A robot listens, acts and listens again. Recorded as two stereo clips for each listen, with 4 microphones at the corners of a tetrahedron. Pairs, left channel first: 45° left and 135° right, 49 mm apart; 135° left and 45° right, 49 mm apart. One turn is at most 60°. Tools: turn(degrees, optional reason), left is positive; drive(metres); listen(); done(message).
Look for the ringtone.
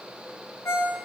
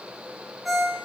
turn(degrees=40, reason="The ringtone: 40° left.")
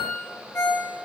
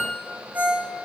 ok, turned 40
done("Facing the ringtone, 2 to 4 m away.")